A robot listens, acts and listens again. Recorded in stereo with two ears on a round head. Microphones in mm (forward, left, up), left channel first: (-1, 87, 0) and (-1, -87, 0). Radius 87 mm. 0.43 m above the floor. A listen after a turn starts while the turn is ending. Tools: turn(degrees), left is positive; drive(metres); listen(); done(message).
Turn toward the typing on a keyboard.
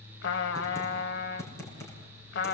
turn(degrees=15)
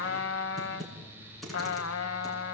done("Facing the typing on a keyboard.")